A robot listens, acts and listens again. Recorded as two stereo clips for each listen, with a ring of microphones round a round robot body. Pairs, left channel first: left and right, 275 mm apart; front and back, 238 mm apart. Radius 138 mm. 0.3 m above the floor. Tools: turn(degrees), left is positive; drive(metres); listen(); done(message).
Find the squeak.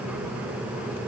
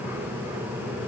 listen()
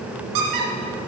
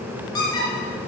turn(degrees=-75)
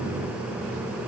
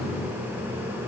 listen()
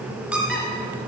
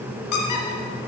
done("Found it: a squeak, straight ahead, 1 to 2 m away.")